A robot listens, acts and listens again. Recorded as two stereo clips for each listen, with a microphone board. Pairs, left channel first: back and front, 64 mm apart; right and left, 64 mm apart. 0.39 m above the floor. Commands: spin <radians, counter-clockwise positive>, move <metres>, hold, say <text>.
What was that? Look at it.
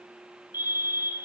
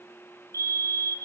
spin -0.96
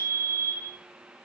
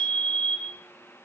spin -0.52
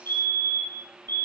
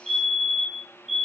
say Found it: a fire alarm, straight ahead.